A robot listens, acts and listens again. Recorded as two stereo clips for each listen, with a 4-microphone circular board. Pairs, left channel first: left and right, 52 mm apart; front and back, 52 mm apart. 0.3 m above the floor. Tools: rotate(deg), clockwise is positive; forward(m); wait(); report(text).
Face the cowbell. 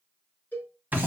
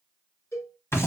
rotate(-35)
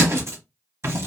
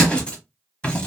wait()
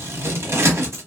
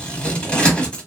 wait()
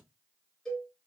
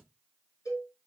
report("Facing the cowbell.")